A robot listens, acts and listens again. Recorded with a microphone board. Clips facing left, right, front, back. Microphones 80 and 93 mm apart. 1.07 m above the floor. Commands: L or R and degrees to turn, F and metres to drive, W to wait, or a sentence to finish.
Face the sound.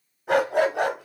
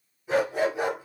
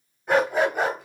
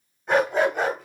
L75
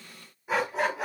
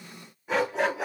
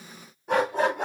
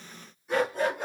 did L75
Facing the dog barking, 2 to 4 m away.